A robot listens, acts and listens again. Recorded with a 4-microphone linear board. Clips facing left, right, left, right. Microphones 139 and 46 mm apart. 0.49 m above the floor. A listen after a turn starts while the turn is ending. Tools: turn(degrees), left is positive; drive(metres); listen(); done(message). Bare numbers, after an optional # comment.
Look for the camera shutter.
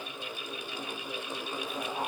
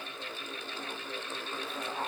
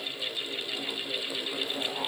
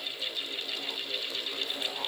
listen()
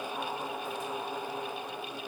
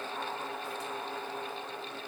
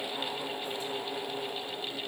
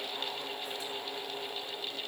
listen()
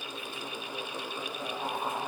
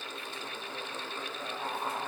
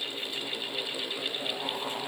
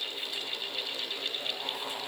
done("I can't make out a camera shutter to turn to.")